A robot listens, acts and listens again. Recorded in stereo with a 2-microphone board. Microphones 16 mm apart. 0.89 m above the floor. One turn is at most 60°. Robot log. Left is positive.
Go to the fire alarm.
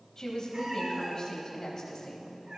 cmd idle
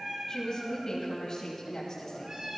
cmd idle
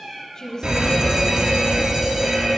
note: The fire alarm: about 65° right or 115° right.
cmd yaw -60
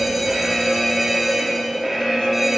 note: So it is at 25° right.
cmd yaw -25
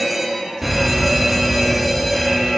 note: The fire alarm is now 15° right.
cmd yaw -15
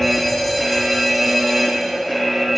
cmd fwd 1.0
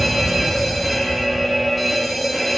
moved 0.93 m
cmd fwd 1.0
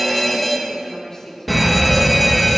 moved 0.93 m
cmd fwd 1.0
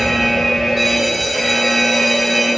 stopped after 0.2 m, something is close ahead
end: Arrived at the fire alarm, straight ahead.